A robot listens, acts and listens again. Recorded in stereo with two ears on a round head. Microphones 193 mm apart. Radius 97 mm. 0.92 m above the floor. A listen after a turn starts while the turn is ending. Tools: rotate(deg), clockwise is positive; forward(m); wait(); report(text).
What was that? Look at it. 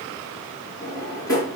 rotate(-15)
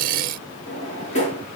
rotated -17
rotate(-145)
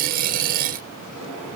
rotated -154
wait()
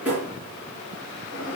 rotate(10)
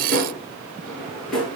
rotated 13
report("Found it: a drawer, straight ahead.")